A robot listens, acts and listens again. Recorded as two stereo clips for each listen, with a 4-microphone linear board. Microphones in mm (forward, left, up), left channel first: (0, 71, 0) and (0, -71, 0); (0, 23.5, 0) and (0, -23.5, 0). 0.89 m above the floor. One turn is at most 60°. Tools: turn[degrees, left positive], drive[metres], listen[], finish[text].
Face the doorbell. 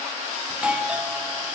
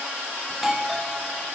Action: turn[-30]
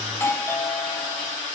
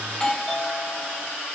Thought: So it is at 20° left.
Action: turn[20]
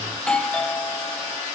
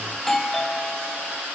Thought: The doorbell is now 10° left.
Action: turn[10]
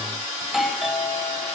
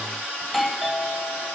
Action: finish[Found it: a doorbell, straight ahead, 1 to 2 m away.]